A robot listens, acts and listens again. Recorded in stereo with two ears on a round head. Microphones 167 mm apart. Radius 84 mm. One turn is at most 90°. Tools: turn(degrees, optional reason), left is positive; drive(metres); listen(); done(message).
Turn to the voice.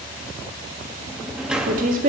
turn(degrees=-50, reason="The woman speaking: about 50° right or 130° right.")
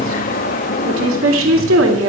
turn(degrees=-80, reason="So it is at 80° right.")
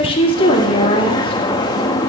turn(degrees=30, reason="The woman speaking is now 30° left.")
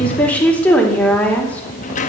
turn(degrees=10, reason="The woman speaking is now 10° left.")
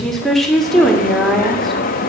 done("Found it: a woman speaking, straight ahead.")